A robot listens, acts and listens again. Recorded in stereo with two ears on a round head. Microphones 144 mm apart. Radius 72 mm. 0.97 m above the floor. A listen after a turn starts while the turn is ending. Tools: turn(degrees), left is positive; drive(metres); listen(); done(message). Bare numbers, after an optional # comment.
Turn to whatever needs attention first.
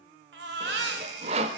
turn(-90)
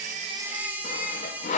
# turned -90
# So it is at 10° right.
turn(-10)
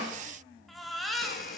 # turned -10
done("Facing the baby crying.")